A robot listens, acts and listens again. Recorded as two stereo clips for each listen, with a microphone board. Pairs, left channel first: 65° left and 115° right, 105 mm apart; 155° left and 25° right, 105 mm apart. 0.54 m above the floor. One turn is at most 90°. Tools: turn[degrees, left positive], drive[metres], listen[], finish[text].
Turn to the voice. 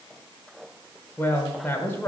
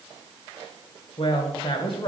Thought: The woman speaking: 135° left.
Action: turn[90]
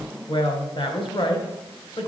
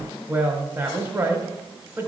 Thought: The woman speaking is now 45° left.
Action: turn[45]
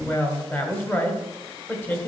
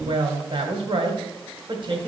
Action: finish[Facing the woman speaking.]